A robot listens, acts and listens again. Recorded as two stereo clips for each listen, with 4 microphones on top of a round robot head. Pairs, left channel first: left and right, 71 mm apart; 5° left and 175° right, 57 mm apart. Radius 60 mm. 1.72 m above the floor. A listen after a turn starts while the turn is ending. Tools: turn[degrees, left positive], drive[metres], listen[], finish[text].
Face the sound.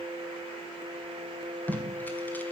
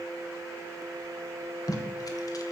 Thought: The tape being pulled: 20° left.
Action: turn[20]
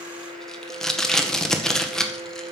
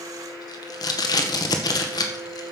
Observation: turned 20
Action: finish[Facing the tape being pulled, 1 to 2 m away.]